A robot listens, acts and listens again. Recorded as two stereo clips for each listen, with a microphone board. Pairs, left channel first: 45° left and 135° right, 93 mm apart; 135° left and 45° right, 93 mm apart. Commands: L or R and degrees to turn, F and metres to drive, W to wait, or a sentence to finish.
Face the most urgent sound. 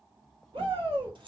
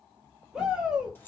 R125
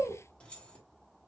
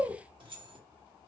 Found it: a shout, straight ahead.